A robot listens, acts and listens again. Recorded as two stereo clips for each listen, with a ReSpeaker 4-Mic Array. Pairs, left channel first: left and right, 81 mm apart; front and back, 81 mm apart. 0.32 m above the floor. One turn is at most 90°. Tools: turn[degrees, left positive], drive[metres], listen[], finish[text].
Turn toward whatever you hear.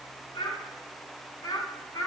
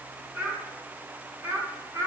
Thought: The child speaking: 135° left.
Action: turn[90]
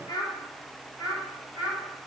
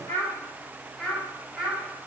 Thought: The child speaking is now 95° left.
Action: turn[90]
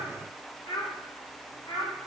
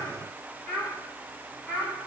Thought: The child speaking is now 85° left.
Action: turn[85]
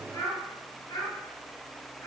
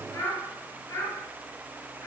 Thought: The child speaking is now 35° left.
Action: turn[35]
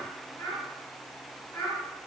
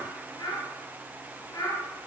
Thought: The child speaking is now 15° left.
Action: turn[15]
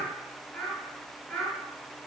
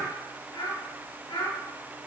Action: finish[Facing the child speaking, 2 to 4 m away.]